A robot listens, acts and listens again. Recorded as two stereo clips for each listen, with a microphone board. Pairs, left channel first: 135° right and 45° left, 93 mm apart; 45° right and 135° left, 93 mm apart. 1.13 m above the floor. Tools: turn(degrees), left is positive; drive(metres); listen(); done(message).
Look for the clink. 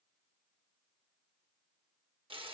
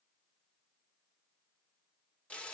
listen()
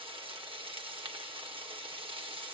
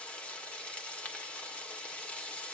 listen()
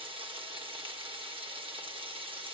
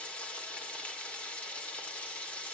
done("I can't make out a clink to turn to.")